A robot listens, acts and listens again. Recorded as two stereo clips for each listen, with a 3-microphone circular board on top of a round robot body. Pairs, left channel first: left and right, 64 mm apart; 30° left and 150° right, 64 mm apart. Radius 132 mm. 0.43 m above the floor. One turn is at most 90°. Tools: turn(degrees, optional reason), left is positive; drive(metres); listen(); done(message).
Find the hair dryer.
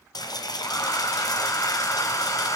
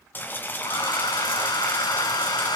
turn(degrees=45, reason="The hair dryer: 45° left.")
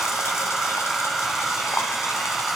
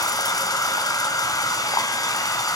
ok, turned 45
done("Found it: a hair dryer, straight ahead.")